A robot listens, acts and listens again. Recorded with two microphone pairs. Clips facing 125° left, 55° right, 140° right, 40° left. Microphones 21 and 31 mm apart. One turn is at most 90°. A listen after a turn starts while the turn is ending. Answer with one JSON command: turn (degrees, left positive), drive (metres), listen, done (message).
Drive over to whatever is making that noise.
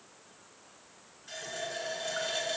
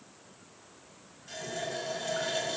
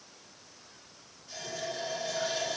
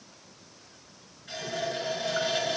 {"turn": 35}
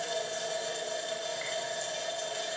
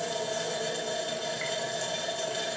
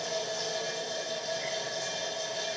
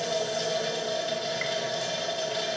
{"turn": 10}
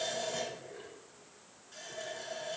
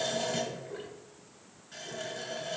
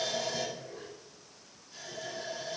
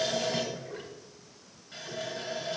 {"drive": 1.0}
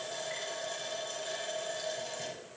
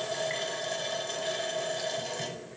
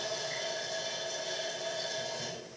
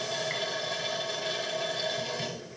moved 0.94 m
{"drive": 1.0}
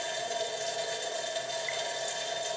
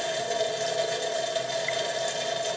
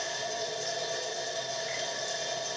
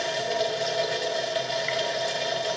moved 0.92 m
{"drive": 1.0}
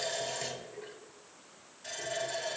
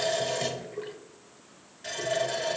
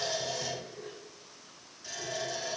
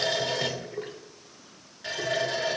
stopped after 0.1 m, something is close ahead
{"done": "Arrived at the running tap, straight ahead."}